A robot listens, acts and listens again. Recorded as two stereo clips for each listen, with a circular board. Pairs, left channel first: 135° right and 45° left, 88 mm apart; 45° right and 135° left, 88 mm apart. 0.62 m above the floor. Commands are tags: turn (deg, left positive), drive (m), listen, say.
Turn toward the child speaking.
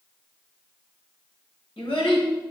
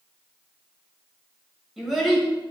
<turn deg="-130"/>
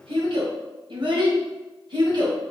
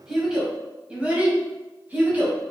<turn deg="65"/>
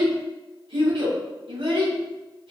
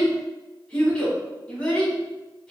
<turn deg="35"/>
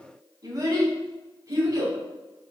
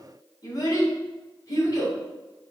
<say>Facing the child speaking, 2 to 4 m away.</say>